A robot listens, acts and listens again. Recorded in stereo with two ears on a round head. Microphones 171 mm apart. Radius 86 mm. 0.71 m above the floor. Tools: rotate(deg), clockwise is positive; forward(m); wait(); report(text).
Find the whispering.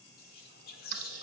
rotate(-55)
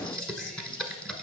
wait()
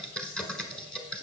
wait()
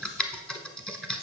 report("I heard whispering, but can't make it out now. It was about straight ahead or 70° left.")